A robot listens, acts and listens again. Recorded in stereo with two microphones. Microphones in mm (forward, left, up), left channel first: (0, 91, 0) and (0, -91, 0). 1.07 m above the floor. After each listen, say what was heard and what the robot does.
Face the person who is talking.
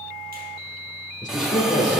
The man speaking: about 45° left or 135° left. Turn 45° left.
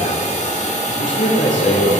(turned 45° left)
So it is at 95° left. Turn 95° left.
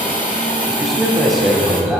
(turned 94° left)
Facing the man speaking, 2 to 4 m away.